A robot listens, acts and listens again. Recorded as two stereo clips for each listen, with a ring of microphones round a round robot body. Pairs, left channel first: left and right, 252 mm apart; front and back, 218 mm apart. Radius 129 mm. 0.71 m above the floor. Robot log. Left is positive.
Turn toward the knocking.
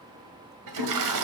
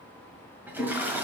cmd idle
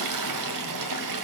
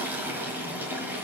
cmd idle
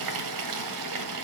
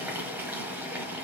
end: I can't make out knocking, only a toilet flushing.